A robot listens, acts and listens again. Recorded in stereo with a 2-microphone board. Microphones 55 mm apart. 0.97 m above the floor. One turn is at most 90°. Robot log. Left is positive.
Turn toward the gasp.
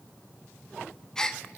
cmd yaw +30
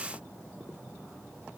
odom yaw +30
cmd idle
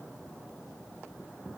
end: I heard a gasp, but can't make it out now. It was about 15° right or 135° left.